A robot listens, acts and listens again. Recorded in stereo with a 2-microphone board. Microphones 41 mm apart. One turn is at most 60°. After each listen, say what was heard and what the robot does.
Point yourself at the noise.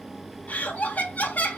The laughter: about 45° left or 135° left. Turn 45° left.
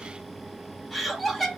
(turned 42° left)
Facing the laughter, 1 to 2 m away.